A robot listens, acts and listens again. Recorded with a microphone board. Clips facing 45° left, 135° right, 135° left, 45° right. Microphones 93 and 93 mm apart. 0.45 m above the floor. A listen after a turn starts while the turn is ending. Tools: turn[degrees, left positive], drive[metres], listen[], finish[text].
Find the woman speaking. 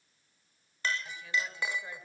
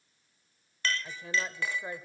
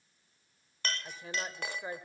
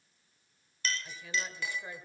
Thought: The woman speaking: straight behind.
Action: turn[180]
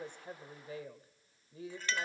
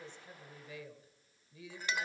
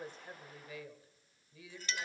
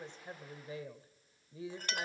Action: finish[Facing the woman speaking.]